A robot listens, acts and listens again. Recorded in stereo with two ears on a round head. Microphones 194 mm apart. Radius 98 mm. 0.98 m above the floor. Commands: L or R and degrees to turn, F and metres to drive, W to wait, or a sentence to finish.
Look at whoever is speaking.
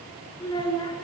L20
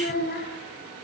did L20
L135
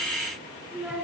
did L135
Facing the child speaking.